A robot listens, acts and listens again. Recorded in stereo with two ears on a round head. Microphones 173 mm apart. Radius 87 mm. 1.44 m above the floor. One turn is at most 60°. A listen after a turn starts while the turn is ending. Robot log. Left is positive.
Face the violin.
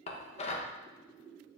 cmd idle
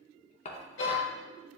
note: The violin: about 70° left or 110° left.
cmd yaw +60
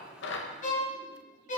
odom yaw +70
note: So it is at 40° left.
cmd yaw +40
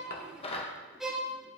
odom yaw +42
end: Found it: a violin, straight ahead, 1 to 2 m away.